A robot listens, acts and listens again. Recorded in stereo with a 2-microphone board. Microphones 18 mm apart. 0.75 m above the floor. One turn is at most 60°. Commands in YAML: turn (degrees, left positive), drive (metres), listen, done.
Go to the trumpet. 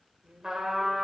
turn: -20
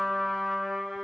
drive: 1.0
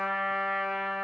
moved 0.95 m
drive: 1.0
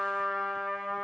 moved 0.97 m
turn: 15
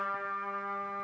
drive: 1.0
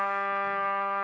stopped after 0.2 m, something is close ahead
done: "Arrived at the trumpet, straight ahead."